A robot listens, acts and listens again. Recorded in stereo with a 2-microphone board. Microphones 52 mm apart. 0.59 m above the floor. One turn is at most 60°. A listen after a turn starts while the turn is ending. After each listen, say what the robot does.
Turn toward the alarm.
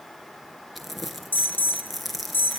Turn 40° left.
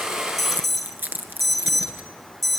Facing the alarm.